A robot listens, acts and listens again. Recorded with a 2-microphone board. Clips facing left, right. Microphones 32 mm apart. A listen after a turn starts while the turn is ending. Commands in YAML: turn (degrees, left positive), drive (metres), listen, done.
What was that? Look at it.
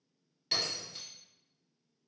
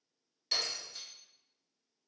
turn: 30
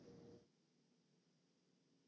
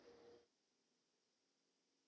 listen: true
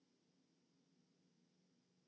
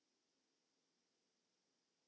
done: "I heard breaking glass, but can't make it out now. It was about 15° right or 135° left."